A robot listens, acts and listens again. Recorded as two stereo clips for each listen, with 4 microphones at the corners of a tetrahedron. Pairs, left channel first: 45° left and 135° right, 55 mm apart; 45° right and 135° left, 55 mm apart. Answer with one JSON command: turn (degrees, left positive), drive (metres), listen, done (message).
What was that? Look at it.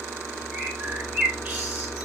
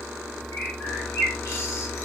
{"turn": -70}
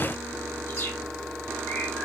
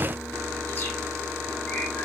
{"listen": true}
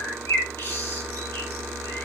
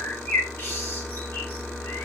{"done": "Facing the bird, 1 to 2 m away."}